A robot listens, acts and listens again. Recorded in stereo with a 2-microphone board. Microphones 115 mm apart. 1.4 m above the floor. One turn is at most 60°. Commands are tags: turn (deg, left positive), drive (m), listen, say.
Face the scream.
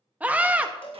<turn deg="-30"/>
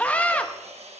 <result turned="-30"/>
<turn deg="15"/>
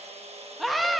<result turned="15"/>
<say>Facing the scream.</say>